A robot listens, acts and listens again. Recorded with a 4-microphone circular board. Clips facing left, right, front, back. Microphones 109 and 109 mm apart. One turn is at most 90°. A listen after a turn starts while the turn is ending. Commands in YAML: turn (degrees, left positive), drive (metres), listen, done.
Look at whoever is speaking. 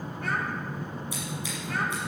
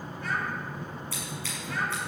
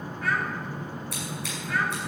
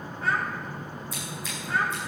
turn: 90
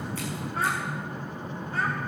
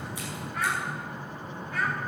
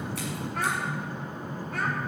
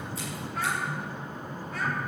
turn: 30
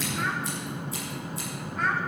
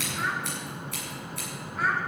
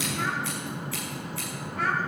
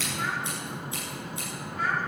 done: "Found it: a child speaking, straight ahead, 2 to 4 m away."